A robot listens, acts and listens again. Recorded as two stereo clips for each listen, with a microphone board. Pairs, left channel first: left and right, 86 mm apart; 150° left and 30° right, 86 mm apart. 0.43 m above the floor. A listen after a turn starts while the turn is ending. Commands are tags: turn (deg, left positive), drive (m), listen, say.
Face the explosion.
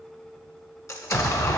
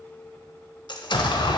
<turn deg="140"/>
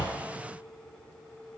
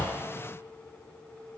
<say>I heard an explosion from this way, but can't make it out now.</say>